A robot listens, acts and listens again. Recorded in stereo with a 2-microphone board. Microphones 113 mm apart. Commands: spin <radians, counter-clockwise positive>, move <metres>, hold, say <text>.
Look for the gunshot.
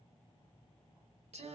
hold
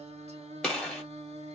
spin 0.52
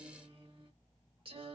hold
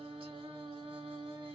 say I heard a gunshot, but can't make it out now. It was about 25° right or 145° left.